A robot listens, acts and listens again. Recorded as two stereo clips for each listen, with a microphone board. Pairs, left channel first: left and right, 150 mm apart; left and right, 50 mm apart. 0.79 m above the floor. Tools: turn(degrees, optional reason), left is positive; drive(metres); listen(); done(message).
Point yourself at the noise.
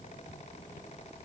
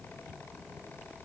listen()
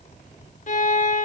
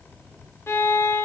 turn(degrees=55, reason="The violin: about 55° left or 125° left.")
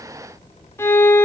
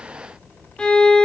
turn(degrees=20, reason="So it is at 20° left.")
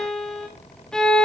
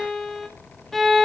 done("Facing the violin, 1 to 2 m away.")